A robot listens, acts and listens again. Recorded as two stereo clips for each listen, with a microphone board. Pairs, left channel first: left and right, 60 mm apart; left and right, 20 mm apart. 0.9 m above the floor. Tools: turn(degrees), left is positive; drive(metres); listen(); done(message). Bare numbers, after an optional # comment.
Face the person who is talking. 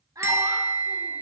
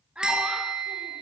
turn(-90)
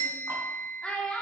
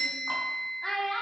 # So it is at 15° left.
turn(15)
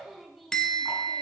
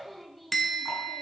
listen()
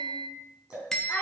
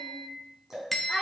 # The child speaking is now 20° left.
turn(20)
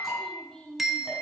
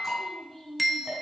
listen()
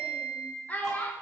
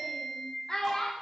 # The child speaking is now 25° left.
turn(25)
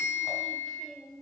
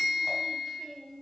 listen()
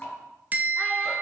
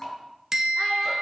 listen()
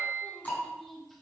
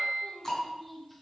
done("I heard a child speaking from this way, but can't make it out now.")